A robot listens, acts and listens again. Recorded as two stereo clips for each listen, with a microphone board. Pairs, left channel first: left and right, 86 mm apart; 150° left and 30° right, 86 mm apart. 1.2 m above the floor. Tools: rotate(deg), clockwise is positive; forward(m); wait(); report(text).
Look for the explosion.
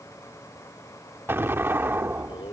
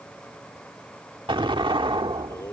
rotate(25)
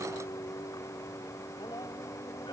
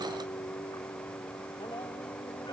report("Facing where the explosion came from. I can't hear it now.")